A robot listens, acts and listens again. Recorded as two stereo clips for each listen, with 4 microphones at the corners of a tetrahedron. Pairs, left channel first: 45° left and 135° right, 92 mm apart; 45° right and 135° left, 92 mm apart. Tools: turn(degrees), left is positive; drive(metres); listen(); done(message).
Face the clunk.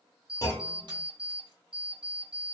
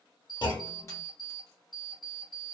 done("Found it: a clunk, straight ahead.")